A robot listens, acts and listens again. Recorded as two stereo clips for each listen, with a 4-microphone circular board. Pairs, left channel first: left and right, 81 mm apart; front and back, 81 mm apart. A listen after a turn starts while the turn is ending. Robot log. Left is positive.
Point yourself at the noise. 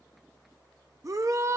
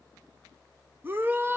note: The shout: 125° right.
cmd yaw -125
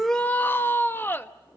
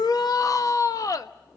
note: The shout is now 30° left.
cmd yaw +30
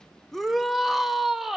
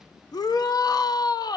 end: Found it: a shout, straight ahead.